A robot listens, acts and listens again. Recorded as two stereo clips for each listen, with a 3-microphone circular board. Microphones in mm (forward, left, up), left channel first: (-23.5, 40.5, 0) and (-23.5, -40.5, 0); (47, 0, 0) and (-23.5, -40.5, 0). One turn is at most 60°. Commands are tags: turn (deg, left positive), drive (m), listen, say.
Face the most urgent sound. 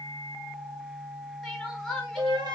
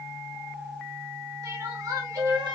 <turn deg="60"/>
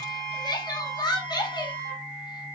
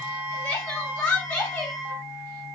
<turn deg="60"/>
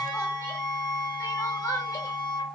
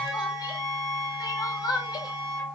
<turn deg="55"/>
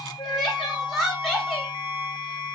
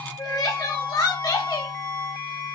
<say>Found it: crying, straight ahead.</say>